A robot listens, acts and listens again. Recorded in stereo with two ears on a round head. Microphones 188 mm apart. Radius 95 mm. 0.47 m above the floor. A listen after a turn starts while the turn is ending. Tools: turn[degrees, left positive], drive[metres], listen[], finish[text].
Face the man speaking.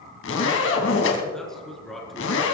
Action: turn[30]
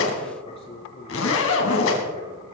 Thought: So it is at 150° left.
Action: turn[150]
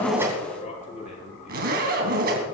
Thought: The man speaking is now 35° left.
Action: turn[35]
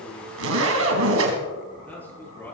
Thought: The man speaking is now 10° left.
Action: turn[10]
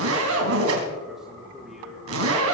Action: finish[Facing the man speaking, over 4 m away.]